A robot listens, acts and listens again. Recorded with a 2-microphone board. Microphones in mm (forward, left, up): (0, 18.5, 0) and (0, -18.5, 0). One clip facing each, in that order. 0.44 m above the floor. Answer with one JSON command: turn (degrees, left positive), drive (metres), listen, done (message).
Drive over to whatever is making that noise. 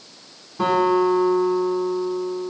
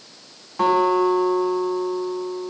{"turn": -75}
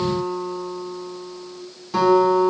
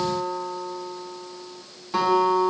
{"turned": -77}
{"turn": -10}
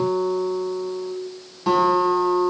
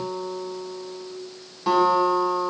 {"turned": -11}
{"drive": 1.0}
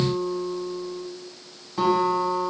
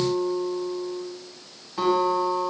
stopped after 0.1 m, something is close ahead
{"done": "Something is in my way. I am facing the guitar but have not reached it."}